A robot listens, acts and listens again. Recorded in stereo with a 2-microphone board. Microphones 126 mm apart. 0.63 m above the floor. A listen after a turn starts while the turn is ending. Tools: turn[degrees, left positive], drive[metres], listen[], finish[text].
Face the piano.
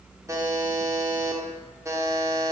Action: listen[]
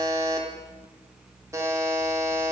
Action: listen[]
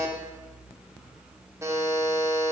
Action: finish[I can't make out a piano to turn to.]